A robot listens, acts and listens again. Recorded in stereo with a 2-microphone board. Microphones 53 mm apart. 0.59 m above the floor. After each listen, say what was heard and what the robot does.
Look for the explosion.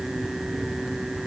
Keep listening.
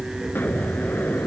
The explosion: about 40° left or 140° left. Turn 40° left.
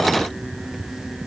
Keep listening.
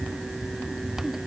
I heard an explosion, but can't make it out now. It was about straight ahead or 100° left.